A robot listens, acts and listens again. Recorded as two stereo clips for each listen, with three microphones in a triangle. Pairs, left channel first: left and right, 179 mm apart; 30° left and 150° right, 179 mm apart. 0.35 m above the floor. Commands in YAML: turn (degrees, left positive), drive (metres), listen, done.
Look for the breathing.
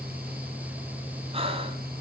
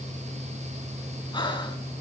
turn: -35
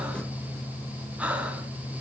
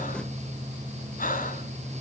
turn: -10
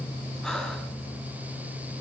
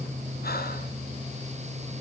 listen: true
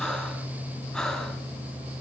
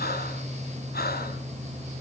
done: "Facing the breathing, 2 to 4 m away."